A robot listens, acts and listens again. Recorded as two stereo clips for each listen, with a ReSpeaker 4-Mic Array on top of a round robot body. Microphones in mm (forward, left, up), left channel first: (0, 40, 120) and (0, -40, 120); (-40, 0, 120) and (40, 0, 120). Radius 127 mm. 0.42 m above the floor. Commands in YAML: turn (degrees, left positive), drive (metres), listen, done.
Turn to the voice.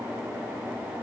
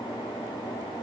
listen: true
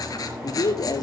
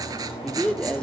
turn: 105
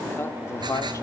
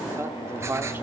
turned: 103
turn: 55
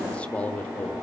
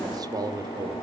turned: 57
turn: 25
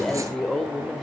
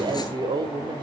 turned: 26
done: "Facing the man speaking, 2 to 4 m away."